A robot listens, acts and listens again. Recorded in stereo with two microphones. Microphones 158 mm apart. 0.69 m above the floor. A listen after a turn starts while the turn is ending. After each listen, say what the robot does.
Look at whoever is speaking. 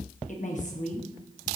Turn 50° left.
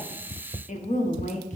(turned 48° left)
Turn 65° left.
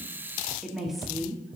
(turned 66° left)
Found it: a woman speaking, straight ahead.